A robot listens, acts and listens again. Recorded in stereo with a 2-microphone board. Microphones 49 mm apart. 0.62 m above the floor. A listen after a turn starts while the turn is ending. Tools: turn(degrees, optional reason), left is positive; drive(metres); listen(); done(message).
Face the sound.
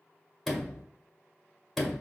turn(degrees=30)
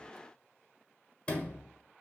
turn(degrees=150, reason="So it is at 150° left.")
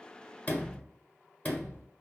turn(degrees=35, reason="The sliding door is now 35° left.")
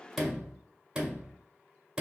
turn(degrees=-20, reason="The sliding door is now 20° right.")
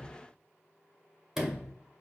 done("Found it: a sliding door, straight ahead, 1 to 2 m away.")